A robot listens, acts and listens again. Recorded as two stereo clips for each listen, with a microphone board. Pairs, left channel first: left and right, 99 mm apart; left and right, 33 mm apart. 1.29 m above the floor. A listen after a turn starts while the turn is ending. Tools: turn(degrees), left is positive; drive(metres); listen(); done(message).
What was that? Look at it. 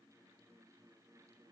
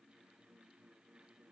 listen()
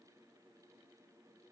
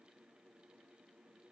listen()
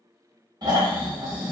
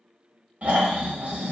turn(degrees=-40)
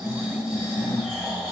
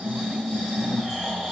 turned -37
turn(degrees=-10)
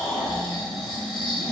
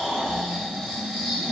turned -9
done("Facing the snoring, under 1 m away.")